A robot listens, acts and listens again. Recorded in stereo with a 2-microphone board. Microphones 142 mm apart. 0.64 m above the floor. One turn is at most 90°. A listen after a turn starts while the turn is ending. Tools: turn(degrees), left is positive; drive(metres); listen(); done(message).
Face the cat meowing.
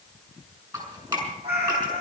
turn(degrees=-45)
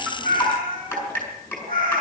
turn(degrees=-80)
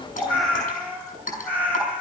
turn(degrees=15)
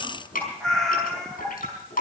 done("Found it: a cat meowing, straight ahead, over 4 m away.")